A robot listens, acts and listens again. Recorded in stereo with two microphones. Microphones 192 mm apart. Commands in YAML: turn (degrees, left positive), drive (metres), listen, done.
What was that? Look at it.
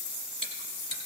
turn: -40
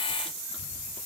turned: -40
listen: true
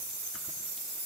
listen: true
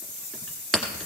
done: "Facing the chewing, 2 to 4 m away."